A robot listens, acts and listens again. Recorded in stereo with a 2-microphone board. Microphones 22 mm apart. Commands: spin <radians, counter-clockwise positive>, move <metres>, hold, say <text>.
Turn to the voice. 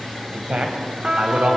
spin -1.13
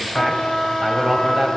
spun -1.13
spin -0.26
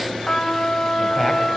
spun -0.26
hold
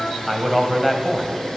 say Facing the man speaking.